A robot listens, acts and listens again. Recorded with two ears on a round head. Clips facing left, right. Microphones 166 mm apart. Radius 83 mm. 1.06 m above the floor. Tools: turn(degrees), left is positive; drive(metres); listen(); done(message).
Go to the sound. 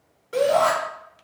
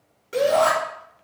turn(degrees=-25)
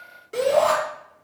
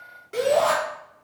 drive(metres=1.0)
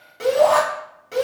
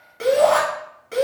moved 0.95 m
drive(metres=1.0)
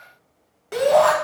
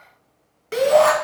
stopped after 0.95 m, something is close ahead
done("I am next to the shout.")